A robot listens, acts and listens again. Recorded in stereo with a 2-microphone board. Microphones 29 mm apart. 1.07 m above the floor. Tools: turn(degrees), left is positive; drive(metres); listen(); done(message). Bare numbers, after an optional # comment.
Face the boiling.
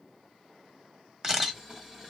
# The boiling: about 25° right or 155° right.
turn(-25)
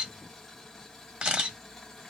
done("Found it: boiling, straight ahead, 1 to 2 m away.")